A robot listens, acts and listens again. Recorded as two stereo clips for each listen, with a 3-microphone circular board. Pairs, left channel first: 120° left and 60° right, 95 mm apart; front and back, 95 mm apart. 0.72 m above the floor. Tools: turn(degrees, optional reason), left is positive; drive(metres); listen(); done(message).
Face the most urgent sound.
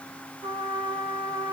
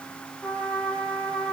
listen()
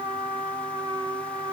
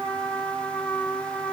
listen()
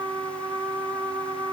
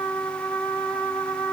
done("I can't make out anything urgent to turn to.")